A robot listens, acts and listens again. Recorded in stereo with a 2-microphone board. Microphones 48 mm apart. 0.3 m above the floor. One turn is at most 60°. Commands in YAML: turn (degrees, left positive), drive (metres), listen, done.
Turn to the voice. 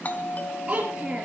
turn: -20
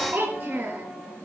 turn: -35
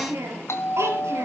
turn: -60
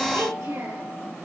turn: -60
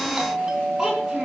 listen: true
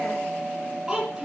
turn: -15
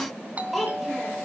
done: "Found it: a child speaking, straight ahead."